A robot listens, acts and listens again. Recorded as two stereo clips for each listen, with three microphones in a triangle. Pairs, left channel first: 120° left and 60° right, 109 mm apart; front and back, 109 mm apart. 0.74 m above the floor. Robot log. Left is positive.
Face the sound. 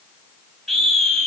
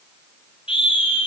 note: The scream: 35° left.
cmd yaw +35
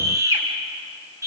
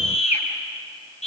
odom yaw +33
end: Facing the scream.